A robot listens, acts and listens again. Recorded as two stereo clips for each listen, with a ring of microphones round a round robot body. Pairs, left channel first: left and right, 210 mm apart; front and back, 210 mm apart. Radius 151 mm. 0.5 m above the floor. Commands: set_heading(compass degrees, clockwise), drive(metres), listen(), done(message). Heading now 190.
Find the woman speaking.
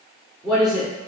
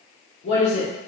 done("Found it: a woman speaking, straight ahead.")